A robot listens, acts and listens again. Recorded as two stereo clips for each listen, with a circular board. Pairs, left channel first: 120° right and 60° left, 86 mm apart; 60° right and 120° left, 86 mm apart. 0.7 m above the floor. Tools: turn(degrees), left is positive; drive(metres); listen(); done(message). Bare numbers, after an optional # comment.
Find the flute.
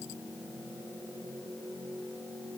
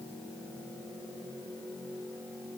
listen()
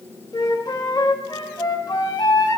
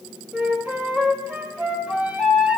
# The flute: 160° right.
turn(-160)
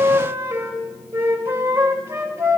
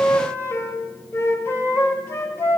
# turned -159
done("Found it: a flute, straight ahead.")